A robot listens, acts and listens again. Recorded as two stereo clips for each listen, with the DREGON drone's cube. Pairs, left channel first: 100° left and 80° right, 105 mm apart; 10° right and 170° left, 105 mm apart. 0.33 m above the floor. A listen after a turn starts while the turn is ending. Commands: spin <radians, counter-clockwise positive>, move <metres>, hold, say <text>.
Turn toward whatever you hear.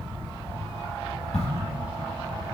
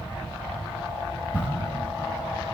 spin 1.57
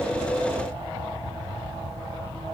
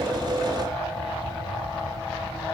say I heard a crack from this way, but can't make it out now.